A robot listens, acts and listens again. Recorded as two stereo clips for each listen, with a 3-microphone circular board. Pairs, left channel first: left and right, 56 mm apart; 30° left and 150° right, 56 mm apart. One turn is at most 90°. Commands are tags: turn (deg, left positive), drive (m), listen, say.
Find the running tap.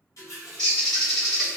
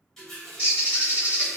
<turn deg="90"/>
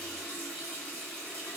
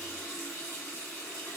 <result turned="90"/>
<turn deg="25"/>
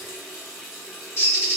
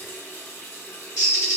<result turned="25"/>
<say>Found it: a running tap, straight ahead.</say>